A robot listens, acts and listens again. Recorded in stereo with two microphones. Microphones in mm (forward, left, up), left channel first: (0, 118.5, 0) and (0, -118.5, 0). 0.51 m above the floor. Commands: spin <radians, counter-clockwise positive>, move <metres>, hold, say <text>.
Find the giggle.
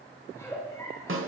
spin 0.52
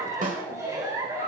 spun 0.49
spin -0.26
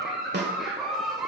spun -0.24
say Found it: a giggle, straight ahead.